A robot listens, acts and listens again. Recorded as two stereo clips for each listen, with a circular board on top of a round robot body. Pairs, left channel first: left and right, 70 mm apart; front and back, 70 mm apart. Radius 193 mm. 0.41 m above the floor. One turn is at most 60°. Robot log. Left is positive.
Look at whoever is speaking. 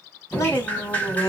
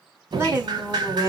note: The woman speaking: 130° left.
cmd yaw +60
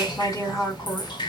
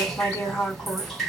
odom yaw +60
note: The woman speaking is now 50° left.
cmd yaw +50
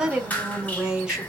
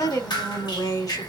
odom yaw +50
note: The woman speaking is now 10° right.
cmd yaw -10
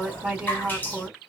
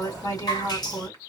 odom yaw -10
end: Facing the woman speaking, 1 to 2 m away.